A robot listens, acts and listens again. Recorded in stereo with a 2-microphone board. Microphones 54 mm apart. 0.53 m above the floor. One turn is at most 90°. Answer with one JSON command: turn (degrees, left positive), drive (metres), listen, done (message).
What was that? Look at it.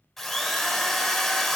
{"turn": 30}
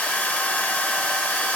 {"turn": 90}
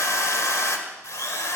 {"turn": 90}
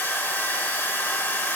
{"turn": 45}
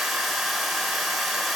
{"done": "Found it: a drill, straight ahead, 1 to 2 m away."}